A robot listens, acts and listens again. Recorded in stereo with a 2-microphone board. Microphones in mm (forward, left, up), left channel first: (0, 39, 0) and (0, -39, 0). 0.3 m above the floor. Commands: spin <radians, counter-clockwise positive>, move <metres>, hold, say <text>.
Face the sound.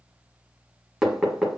spin -0.52
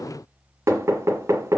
spin -2.53
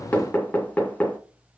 spin 0.35
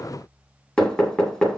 spin 0.17
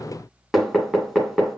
say Found it: knocking, straight ahead, 1 to 2 m away.